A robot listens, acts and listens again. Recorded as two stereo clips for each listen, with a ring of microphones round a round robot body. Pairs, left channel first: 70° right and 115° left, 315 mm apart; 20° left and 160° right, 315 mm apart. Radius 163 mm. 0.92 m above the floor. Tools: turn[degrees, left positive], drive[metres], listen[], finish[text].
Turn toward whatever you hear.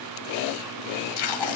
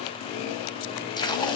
Thought: The tape being pulled: 55° right.
Action: turn[-55]
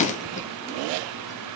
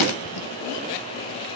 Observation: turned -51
Action: finish[Facing the tape being pulled, 1 to 2 m away.]